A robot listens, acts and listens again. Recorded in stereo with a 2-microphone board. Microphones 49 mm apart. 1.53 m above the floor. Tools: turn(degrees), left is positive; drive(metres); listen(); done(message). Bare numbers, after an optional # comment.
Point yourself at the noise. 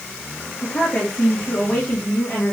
# The woman speaking: about 40° left or 140° left.
turn(40)
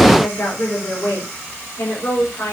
# So it is at 90° left.
turn(90)
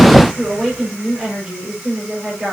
done("Facing the woman speaking.")